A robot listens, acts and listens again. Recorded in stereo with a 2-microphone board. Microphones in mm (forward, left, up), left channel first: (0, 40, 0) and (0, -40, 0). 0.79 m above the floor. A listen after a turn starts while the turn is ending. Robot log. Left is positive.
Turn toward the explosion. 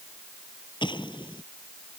cmd yaw +90
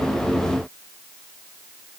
end: I heard an explosion from this way, but can't make it out now.